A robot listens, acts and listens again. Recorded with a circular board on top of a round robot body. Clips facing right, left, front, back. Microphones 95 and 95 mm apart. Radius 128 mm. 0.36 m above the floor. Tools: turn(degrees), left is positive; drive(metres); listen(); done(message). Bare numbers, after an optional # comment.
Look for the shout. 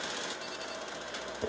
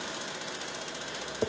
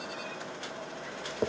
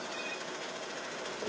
listen()
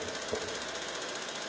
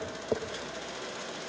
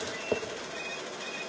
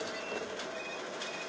listen()
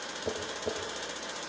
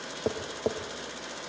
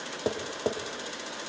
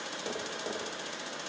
done("I can't make out a shout, only tapping.")